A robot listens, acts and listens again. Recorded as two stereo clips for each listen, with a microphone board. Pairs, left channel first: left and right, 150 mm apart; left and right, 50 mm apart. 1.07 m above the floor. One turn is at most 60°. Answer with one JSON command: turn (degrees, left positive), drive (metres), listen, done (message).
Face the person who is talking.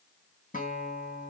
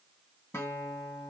{"listen": true}
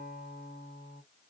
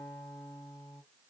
{"listen": true}
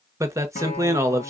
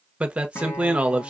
{"turn": -20}
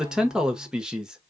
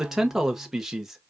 {"done": "Found it: a man speaking, straight ahead."}